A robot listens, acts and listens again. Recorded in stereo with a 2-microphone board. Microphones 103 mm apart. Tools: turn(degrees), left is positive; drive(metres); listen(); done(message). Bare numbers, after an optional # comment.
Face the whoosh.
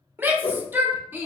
# The whoosh: about 70° left or 110° left.
turn(70)
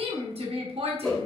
done("Found it: a whoosh, straight ahead.")